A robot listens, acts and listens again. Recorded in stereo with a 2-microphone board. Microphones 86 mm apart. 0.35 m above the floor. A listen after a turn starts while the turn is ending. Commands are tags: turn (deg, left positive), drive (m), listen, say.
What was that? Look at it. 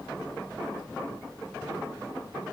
<listen/>
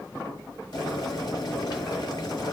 <turn deg="55"/>
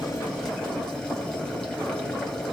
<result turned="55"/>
<turn deg="10"/>
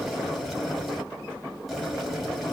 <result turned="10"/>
<say>Facing the boiling.</say>